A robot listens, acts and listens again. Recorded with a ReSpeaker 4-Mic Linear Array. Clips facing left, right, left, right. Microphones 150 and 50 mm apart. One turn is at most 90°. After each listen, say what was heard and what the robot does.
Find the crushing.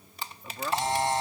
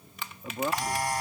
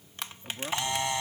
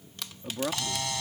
The crushing: about 35° left or 145° left. Turn 35° left.
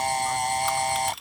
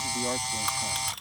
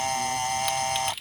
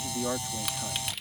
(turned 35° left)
Facing the crushing.